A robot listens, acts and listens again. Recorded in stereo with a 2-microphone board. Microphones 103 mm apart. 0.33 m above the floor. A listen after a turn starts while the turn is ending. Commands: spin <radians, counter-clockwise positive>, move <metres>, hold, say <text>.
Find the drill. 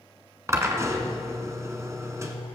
spin -0.52
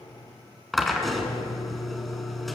say Found it: a drill, straight ahead, 1 to 2 m away.